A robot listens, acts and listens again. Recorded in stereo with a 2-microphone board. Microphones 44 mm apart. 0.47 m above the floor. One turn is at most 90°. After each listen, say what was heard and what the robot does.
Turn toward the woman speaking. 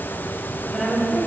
Turn 30° right.
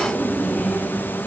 So it is at 20° left. Turn 20° left.
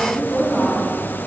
Found it: a woman speaking, straight ahead.